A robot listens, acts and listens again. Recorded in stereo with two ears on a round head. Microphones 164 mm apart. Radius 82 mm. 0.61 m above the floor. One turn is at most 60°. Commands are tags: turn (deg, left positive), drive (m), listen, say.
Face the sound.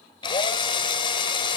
<turn deg="25"/>
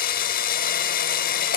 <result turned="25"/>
<turn deg="60"/>
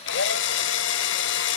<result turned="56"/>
<turn deg="60"/>
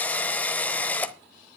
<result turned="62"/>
<turn deg="10"/>
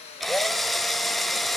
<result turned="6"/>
<say>Facing the drill, under 1 m away.</say>